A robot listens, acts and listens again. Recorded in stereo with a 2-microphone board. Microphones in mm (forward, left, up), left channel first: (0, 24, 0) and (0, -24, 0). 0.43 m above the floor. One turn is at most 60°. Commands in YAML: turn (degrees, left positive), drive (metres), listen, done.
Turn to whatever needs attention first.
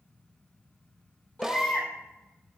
turn: 25
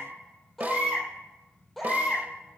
done: "Facing the baby crying."